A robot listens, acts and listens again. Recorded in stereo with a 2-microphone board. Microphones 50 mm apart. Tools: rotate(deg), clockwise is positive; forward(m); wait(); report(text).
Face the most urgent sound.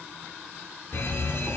rotate(-55)
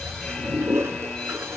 rotate(-10)
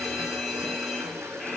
report("Facing the fire alarm.")